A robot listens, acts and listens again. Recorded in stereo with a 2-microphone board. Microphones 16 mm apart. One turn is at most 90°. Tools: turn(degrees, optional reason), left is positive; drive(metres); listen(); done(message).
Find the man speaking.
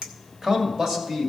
turn(degrees=-50, reason="The man speaking: about 50° right or 130° right.")
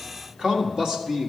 turn(degrees=-45, reason="So it is at 45° right.")
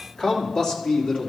turn(degrees=40, reason="The man speaking is now 40° left.")
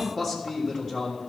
turn(degrees=-10, reason="The man speaking is now 10° right.")
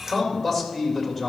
done("Found it: a man speaking, straight ahead.")